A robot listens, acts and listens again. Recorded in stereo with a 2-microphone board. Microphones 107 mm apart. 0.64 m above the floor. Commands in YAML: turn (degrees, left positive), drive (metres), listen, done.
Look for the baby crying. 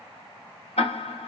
listen: true
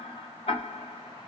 listen: true
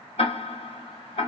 done: "I can't make out a baby crying, only ticking."